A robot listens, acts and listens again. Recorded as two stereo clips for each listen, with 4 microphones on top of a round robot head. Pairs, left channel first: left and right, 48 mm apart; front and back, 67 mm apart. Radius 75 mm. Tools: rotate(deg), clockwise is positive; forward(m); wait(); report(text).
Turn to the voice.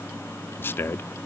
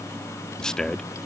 rotate(-75)
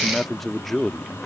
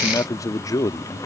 report("Facing the man speaking.")